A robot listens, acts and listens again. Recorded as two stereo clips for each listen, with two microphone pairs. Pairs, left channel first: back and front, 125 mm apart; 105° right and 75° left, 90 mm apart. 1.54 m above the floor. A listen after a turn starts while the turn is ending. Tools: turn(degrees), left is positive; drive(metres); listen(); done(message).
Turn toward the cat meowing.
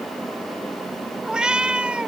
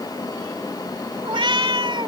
turn(degrees=80)
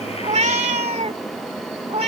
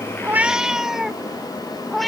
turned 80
turn(degrees=-20)
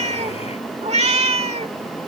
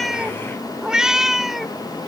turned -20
turn(degrees=-15)
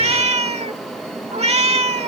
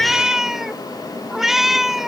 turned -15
turn(degrees=-10)
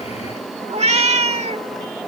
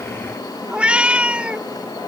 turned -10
done("Found it: a cat meowing, straight ahead.")